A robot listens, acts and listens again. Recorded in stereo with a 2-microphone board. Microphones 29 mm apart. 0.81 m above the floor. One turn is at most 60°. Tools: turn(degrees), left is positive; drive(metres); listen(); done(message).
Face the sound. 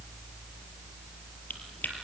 turn(degrees=60)
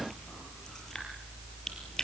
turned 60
turn(degrees=20)
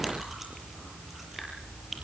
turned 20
done("Found it: chewing, straight ahead, over 4 m away.")